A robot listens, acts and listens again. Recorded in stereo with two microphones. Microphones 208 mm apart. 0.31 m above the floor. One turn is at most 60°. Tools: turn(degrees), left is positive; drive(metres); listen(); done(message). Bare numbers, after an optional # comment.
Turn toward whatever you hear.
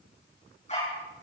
# The dog barking: about 35° left or 145° left.
turn(35)
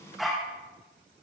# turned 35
done("Facing the dog barking.")